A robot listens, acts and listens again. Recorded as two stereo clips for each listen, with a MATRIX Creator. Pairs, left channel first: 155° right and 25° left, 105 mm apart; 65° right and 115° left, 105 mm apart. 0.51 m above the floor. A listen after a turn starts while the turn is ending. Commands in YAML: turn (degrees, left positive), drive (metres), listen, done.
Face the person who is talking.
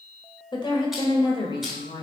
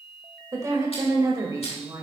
turn: 165
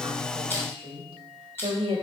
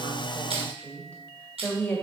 turn: 10
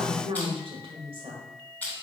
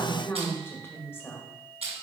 done: "Facing the woman speaking."